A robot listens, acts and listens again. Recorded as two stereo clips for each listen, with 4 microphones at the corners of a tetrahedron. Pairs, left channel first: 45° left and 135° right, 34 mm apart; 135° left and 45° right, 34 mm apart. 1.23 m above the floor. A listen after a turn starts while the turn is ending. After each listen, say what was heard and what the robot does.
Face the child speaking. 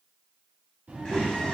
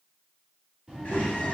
The child speaking: 110° right. Turn 110° right.
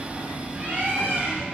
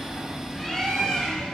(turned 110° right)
Keep listening.
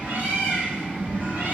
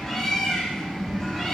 Found it: a child speaking, straight ahead.